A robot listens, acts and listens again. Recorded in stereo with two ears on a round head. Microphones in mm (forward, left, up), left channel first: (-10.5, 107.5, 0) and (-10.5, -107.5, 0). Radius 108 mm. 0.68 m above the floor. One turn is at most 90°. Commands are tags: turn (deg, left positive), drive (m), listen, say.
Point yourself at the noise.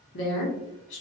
<turn deg="50"/>
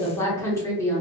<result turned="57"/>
<turn deg="15"/>
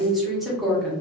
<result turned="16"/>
<say>Found it: a woman speaking, straight ahead, under 1 m away.</say>